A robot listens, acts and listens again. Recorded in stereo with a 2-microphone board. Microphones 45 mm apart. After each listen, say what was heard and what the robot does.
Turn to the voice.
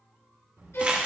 The child speaking: about 75° right or 105° right. Turn 75° right.
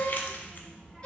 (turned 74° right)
So it is at 10° right. Turn 10° right.
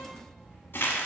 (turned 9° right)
Found it: a child speaking, straight ahead, 2 to 4 m away.